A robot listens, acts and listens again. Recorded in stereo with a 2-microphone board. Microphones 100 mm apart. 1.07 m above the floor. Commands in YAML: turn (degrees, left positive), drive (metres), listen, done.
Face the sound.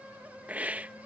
turn: -30
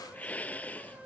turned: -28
turn: 15
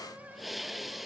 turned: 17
done: "Found it: a hiss, straight ahead."